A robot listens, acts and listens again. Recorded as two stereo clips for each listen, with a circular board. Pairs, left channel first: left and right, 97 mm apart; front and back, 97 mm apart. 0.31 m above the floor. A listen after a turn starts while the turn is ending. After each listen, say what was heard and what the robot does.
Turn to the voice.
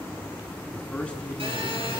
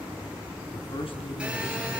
The man speaking: 15° left. Turn 15° left.
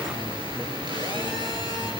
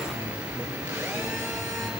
Keep listening.
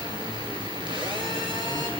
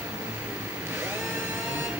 Keep listening.
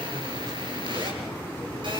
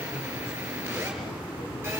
I heard a man speaking from this way, but can't make it out now.